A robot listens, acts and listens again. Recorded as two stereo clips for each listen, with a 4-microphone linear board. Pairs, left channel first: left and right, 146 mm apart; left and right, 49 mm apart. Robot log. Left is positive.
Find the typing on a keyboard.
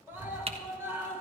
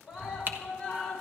note: The typing on a keyboard: about 45° right or 135° right.
cmd yaw -45
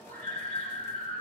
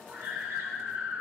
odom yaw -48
cmd idle
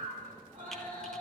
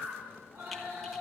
cmd idle
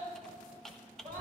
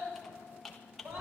end: Found it: typing on a keyboard, straight ahead.